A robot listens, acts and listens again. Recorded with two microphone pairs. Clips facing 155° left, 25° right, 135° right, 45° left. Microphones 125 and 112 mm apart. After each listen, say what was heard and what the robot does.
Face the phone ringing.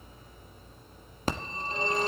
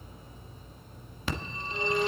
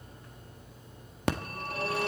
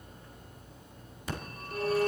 The phone ringing: 155° right. Turn 155° right.
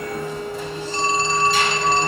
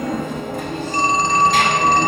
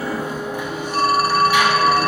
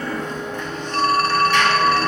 The phone ringing is now 55° right. Turn 55° right.
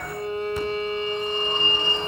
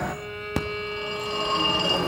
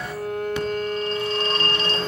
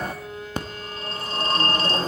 The phone ringing is now 10° right. Turn 10° right.
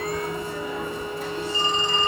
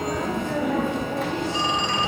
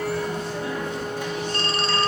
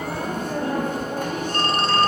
Facing the phone ringing, 1 to 2 m away.